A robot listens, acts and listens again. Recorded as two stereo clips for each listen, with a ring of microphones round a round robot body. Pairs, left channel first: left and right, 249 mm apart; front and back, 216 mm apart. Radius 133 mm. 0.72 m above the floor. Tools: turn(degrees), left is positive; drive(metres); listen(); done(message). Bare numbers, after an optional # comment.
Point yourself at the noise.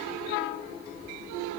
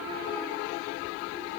listen()
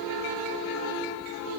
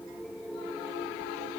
listen()
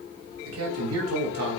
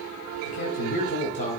# The man speaking: 60° right.
turn(-60)
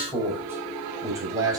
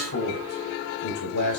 # The man speaking is now 15° right.
turn(-15)
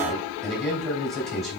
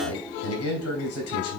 done("Facing the man speaking, 2 to 4 m away.")